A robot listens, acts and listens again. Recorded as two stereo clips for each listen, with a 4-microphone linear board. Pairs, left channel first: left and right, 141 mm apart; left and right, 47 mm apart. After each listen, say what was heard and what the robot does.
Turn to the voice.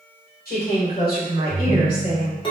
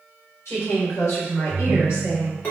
The woman speaking: about 70° left or 110° left. Turn 70° left.
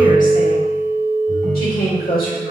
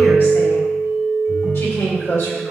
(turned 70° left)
So it is at 85° left. Turn 85° left.
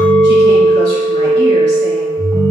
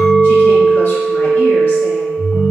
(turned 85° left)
Keep listening.
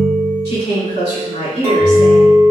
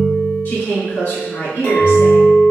The woman speaking is now 40° left. Turn 40° left.
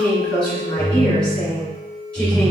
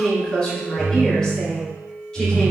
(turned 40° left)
Facing the woman speaking.